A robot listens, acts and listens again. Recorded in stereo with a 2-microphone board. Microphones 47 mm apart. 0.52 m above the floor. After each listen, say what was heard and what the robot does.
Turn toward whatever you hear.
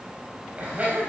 The laughter: about 30° right or 150° right. Turn 30° right.
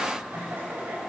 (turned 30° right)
So it is at 130° right. Turn 130° right.
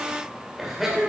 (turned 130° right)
The laughter is now 10° right. Turn 10° right.
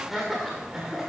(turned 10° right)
The laughter is now 10° right. Turn 10° right.
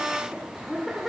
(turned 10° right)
Facing the laughter, 2 to 4 m away.